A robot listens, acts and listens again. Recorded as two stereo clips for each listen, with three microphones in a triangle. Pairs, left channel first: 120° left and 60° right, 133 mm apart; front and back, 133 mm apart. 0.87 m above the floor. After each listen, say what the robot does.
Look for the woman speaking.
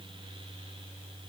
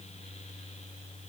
Keep listening.
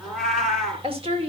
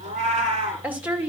Turn 105° right.
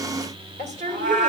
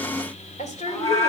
Turn 30° right.
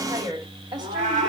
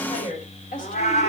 Facing the woman speaking.